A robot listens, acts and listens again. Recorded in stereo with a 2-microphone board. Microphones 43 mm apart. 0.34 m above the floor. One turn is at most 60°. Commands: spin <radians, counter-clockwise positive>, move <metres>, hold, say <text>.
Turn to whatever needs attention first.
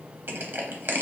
hold
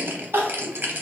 spin -1.05
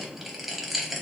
hold
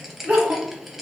spin -0.61
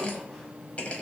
hold
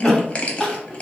say Found it: crying, straight ahead.